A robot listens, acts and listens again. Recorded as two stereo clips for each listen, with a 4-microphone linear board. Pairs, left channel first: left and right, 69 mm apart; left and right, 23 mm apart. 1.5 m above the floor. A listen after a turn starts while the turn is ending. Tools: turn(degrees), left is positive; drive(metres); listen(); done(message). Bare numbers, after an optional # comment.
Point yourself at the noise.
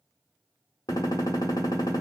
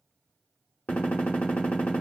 # The gunshot: about 70° left or 110° left.
turn(70)
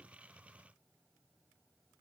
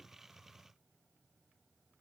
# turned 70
listen()
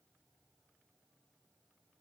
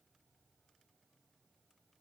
done("I heard a gunshot, but can't make it out now. It was about straight ahead or 40° left.")